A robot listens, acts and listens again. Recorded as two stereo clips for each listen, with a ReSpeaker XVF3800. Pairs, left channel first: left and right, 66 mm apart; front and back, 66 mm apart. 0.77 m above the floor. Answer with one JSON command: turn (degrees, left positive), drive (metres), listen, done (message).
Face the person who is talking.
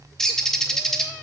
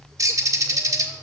{"listen": true}
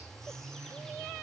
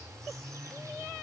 {"listen": true}
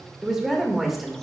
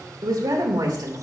{"turn": 180}
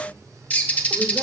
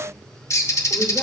{"listen": true}
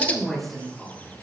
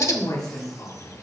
{"done": "Facing the woman speaking, 2 to 4 m away."}